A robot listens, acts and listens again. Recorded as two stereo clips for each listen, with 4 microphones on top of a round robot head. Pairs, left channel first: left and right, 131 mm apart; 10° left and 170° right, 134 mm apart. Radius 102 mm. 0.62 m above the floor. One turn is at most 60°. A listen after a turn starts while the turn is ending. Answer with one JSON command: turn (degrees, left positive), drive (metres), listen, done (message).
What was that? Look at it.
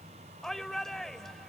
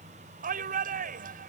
{"turn": 60}
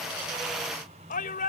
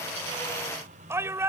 {"turn": 60}
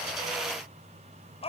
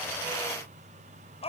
{"turn": 50}
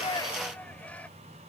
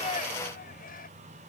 {"listen": true}
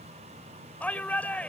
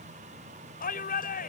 {"turn": 10}
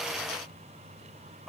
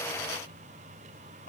{"listen": true}
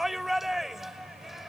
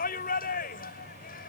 {"done": "Facing the shout."}